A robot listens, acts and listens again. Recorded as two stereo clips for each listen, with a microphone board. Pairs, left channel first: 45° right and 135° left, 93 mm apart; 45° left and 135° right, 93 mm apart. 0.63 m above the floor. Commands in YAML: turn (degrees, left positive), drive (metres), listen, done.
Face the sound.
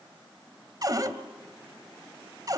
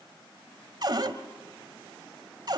turn: -175
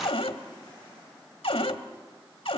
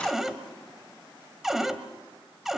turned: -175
turn: -50
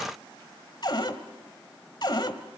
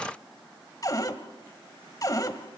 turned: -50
done: "Found it: a cupboard door, straight ahead."